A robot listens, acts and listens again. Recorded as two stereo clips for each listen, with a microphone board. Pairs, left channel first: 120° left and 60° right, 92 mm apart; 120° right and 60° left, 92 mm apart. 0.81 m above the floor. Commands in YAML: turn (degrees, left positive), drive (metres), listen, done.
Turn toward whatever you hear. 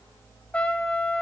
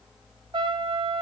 turn: 40
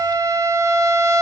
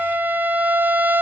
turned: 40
turn: -10
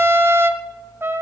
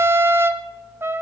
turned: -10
done: "Found it: a trumpet, straight ahead."